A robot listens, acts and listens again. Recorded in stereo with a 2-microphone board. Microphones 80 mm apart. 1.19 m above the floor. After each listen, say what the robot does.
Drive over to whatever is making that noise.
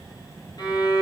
Turn 65° left.
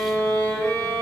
Turn 40° left.
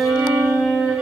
Drive 1.0 m forward.
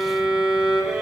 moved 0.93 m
Drive 1.0 m forward.
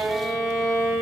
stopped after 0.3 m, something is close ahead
Arrived at the violin, straight ahead.